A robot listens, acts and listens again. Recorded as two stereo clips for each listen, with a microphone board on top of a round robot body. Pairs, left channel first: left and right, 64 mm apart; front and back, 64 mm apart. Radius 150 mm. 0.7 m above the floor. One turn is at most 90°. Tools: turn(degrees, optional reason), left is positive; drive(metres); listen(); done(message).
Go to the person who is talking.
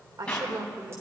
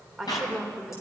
turn(degrees=-90, reason="The woman speaking: 95° right.")
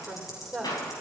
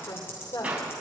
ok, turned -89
drive(metres=1.0)
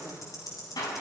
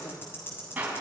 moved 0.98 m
listen()
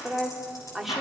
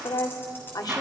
drive(metres=1.0)
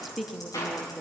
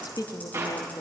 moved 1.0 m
drive(metres=1.0)
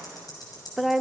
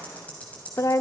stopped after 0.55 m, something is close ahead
done("Arrived at the woman speaking, straight ahead.")